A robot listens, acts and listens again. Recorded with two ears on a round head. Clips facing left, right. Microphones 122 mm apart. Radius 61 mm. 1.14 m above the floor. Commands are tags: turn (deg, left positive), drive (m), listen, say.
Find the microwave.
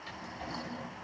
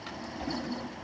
<listen/>
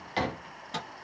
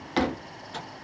<turn deg="70"/>
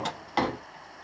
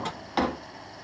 <turn deg="40"/>
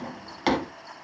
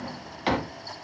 <listen/>
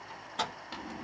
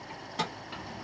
<turn deg="-10"/>
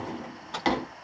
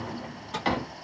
<say>Found it: a microwave, straight ahead, 1 to 2 m away.</say>